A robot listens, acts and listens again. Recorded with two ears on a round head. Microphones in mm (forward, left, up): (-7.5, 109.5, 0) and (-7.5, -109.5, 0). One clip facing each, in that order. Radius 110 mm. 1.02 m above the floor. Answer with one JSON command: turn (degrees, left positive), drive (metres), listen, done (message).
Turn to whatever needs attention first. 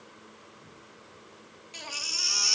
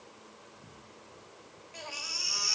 {"turn": 55}
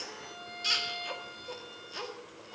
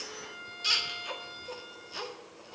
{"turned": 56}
{"done": "Found it: a baby crying, straight ahead."}